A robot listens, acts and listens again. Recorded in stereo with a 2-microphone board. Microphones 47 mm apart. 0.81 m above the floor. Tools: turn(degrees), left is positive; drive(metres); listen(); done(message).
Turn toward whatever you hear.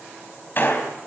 turn(degrees=45)
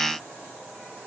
listen()
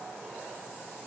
done("I heard a gunshot, but can't make it out now. It was about straight ahead or 90° left.")